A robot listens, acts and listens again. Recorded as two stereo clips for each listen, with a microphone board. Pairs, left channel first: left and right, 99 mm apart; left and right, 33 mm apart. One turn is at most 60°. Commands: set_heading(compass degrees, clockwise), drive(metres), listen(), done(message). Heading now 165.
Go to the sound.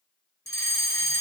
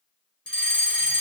set_heading(135)
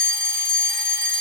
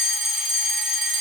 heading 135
drive(1.0)
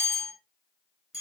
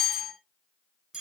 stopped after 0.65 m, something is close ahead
done("Blocked. The fire alarm is further on, straight ahead.")